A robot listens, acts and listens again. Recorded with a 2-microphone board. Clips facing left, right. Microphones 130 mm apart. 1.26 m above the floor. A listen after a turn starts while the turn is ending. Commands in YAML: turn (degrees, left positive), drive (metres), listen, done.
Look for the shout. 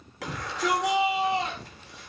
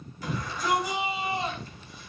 turn: 90
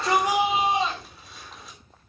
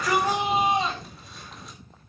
done: "Facing the shout."